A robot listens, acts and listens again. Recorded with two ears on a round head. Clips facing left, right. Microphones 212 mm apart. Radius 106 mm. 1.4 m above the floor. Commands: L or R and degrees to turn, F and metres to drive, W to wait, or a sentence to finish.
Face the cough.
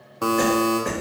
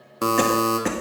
R90
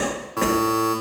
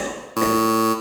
L10
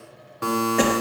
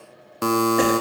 W
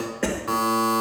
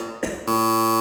Facing the cough.